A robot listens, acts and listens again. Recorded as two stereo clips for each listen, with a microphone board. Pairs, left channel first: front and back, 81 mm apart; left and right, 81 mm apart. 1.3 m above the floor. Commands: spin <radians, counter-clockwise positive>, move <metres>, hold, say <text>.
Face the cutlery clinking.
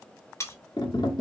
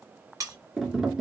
spin -0.87
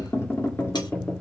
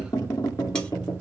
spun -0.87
hold
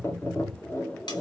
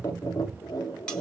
spin 0.17
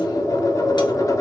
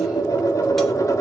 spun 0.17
hold
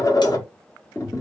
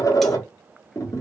hold
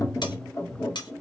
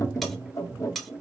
say Found it: cutlery clinking, straight ahead, 1 to 2 m away.